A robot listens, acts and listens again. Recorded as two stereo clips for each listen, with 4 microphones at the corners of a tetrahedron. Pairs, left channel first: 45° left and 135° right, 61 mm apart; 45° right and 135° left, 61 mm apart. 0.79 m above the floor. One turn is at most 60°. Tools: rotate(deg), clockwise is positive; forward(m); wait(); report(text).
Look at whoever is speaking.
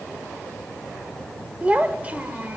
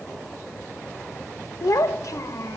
rotate(60)
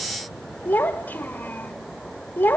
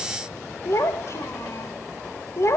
rotate(10)
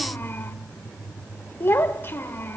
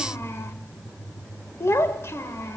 report("Found it: a child speaking, straight ahead, 1 to 2 m away.")